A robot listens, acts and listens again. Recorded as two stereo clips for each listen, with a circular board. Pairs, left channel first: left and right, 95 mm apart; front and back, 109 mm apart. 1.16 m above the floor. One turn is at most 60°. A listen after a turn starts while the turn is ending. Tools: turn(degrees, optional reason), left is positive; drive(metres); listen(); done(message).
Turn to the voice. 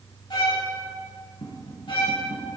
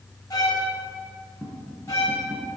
listen()
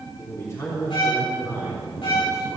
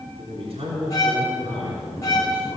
turn(degrees=60, reason="The man speaking: 145° left.")
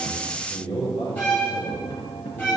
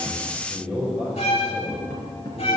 turn(degrees=60, reason="The man speaking is now 95° left.")
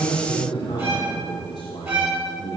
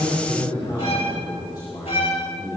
turn(degrees=50, reason="The man speaking is now 50° left.")
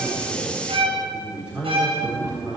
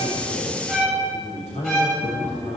turn(degrees=-10, reason="The man speaking is now 10° right.")
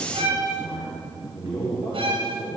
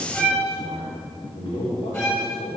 done("Found it: a man speaking, straight ahead.")